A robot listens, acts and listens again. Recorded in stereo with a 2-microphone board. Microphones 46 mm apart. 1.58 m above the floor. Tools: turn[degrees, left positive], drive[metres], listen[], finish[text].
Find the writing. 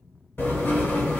Thought: The writing: about 50° left or 130° left.
Action: turn[50]
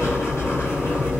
Thought: So it is at 75° left.
Action: turn[75]
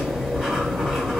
Action: finish[Facing the writing.]